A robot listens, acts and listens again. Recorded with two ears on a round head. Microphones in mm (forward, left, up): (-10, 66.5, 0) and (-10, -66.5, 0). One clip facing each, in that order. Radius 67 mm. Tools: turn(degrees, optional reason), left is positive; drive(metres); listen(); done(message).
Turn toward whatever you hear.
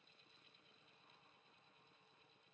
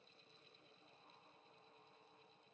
listen()
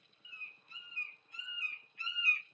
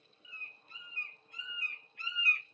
turn(degrees=-50, reason="The bird: about 50° right or 130° right.")
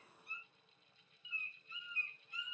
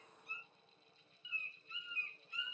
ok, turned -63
turn(degrees=-65, reason="So it is at 65° right.")
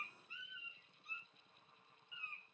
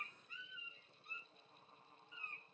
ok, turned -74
turn(degrees=10, reason="The bird is now 10° left.")
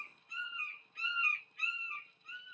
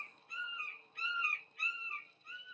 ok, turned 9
done("Facing the bird.")